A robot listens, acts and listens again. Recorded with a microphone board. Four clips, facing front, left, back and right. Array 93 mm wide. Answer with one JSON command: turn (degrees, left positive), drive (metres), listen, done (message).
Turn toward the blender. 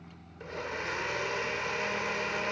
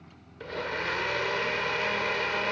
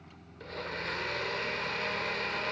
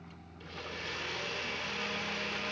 {"turn": 75}
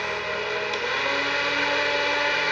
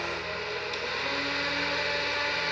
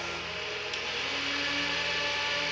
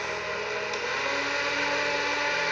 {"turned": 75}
{"turn": -10}
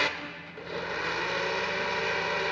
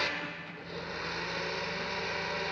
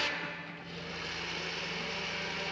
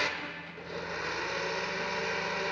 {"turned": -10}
{"done": "Facing the blender."}